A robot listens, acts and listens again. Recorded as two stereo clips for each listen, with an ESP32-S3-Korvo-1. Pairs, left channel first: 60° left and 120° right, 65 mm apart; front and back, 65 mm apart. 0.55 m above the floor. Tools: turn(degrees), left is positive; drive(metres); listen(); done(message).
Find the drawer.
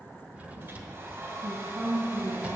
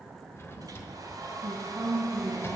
turn(degrees=-50)
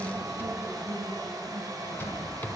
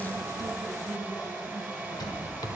done("Facing the drawer, 1 to 2 m away.")